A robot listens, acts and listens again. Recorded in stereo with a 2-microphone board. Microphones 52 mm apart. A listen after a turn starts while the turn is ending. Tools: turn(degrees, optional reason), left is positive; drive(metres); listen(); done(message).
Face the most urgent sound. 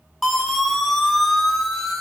turn(degrees=30)
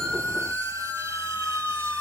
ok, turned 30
turn(degrees=150, reason="So it is at 150° left.")
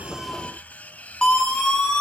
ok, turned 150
turn(degrees=15, reason="The siren is now 15° left.")
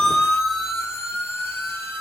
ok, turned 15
done("Facing the siren, over 4 m away.")